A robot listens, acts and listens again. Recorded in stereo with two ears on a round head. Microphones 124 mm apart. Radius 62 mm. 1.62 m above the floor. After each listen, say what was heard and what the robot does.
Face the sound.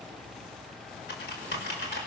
Turn 90° left.
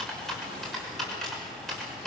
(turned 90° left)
Found it: typing on a keyboard, straight ahead, over 4 m away.